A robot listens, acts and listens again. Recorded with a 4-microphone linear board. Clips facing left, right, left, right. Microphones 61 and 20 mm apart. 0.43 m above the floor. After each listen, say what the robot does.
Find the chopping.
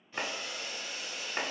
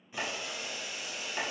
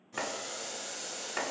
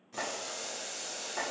Turn 35° left.
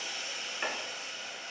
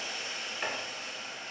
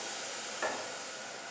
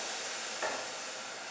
Facing the chopping, under 1 m away.